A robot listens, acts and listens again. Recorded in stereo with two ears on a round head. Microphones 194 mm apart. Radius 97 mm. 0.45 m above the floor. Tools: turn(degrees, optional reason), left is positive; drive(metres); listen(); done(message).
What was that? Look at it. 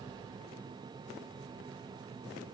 listen()
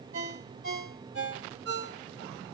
turn(degrees=-65, reason="The ringtone: about 65° right or 115° right.")
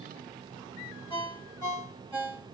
turn(degrees=-30, reason="So it is at 30° right.")
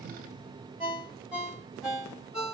done("Facing the ringtone.")